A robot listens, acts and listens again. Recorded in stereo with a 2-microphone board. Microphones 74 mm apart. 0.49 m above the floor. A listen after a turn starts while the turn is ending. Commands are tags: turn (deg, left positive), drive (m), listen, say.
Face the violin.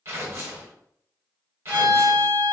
<turn deg="30"/>
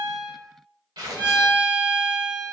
<turn deg="-20"/>
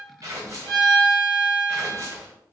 <say>Found it: a violin, straight ahead.</say>